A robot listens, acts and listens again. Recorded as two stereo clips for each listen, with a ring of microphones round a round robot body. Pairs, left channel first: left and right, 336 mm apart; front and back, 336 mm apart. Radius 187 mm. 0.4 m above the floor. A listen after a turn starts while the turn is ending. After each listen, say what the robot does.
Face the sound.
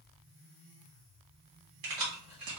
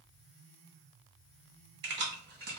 Turn 120° right.
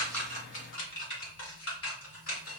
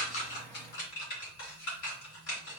Turn 45° left.
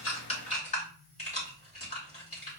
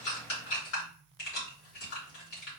Turn 20° left.
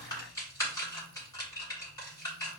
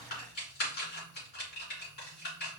Turn 10° left.
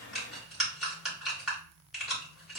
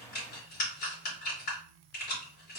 Found it: keys jangling, straight ahead.